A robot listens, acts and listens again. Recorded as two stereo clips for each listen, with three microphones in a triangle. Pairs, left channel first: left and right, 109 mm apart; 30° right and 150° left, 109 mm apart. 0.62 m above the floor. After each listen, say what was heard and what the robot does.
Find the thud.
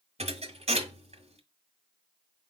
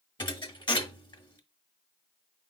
The thud: 75° right. Turn 75° right.
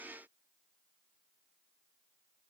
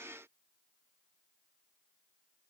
Facing where the thud came from. I can't hear it now.